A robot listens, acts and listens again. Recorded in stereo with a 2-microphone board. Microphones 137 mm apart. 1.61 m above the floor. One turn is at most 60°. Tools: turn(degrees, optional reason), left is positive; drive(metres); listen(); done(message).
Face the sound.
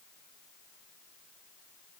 listen()
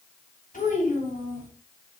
turn(degrees=60)
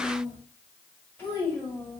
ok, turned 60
turn(degrees=15, reason="So it is at 15° left.")
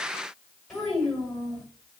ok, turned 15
done("Found it: a child speaking, straight ahead.")